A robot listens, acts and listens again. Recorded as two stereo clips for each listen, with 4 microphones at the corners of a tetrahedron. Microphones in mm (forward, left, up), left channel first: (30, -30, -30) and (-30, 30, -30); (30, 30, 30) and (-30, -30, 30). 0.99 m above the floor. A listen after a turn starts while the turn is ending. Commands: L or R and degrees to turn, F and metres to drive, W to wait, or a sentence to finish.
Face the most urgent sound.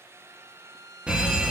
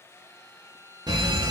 R150
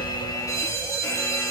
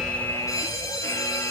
Facing the fire alarm, 2 to 4 m away.